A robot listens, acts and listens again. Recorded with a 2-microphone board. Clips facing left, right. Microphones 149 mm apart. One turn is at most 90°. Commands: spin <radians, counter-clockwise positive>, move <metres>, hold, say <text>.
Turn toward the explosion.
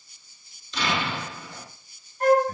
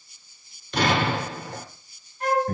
spin -1.05
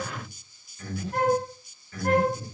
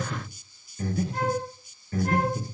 hold
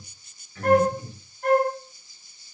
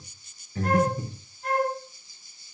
say I heard an explosion, but can't make it out now. It was about straight ahead or 60° right.